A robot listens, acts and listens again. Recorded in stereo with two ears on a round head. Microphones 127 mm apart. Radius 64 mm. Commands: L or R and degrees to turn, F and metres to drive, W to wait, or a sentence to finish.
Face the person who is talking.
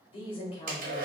L40
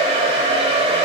W
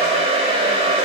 W
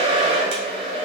I heard a woman speaking, but can't make it out now. It was about straight ahead or 100° left.